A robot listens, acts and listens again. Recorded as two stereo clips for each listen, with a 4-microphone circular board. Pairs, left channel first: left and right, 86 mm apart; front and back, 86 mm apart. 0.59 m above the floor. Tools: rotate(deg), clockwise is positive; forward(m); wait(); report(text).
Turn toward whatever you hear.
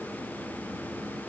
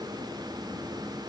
wait()
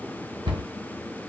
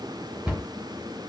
rotate(105)
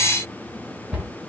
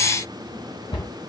rotate(10)
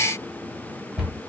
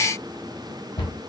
report("Found it: a cupboard door, straight ahead, 1 to 2 m away.")